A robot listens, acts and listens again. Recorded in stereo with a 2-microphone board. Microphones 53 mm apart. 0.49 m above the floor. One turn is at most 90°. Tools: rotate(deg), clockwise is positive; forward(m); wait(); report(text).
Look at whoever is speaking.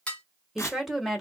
rotate(30)
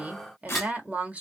rotate(90)
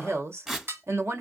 rotate(85)
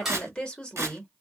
rotate(-20)
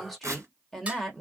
report("Found it: a woman speaking, straight ahead.")